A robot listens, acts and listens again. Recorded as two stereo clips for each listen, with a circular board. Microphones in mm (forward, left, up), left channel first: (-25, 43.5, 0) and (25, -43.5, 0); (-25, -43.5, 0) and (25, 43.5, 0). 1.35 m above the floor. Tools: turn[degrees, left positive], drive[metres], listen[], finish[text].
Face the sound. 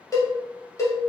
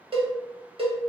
Thought: The cowbell: 65° left.
Action: turn[65]
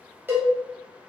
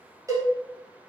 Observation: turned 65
Thought: The cowbell is now 10° left.
Action: turn[10]
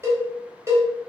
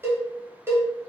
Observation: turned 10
Action: finish[Found it: a cowbell, straight ahead.]